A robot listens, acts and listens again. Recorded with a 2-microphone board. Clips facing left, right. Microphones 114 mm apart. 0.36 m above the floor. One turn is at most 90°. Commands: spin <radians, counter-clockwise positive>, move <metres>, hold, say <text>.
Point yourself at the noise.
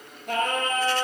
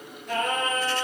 spin 0.96
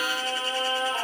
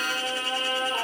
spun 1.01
say Facing the singing.